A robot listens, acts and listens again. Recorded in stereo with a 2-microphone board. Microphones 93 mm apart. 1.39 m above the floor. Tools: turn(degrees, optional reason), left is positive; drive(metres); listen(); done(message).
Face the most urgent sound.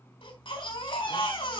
turn(degrees=70, reason="The baby crying: about 70° left or 110° left.")
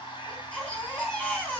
turn(degrees=10, reason="So it is at 10° left.")
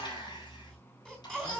done("Facing the baby crying.")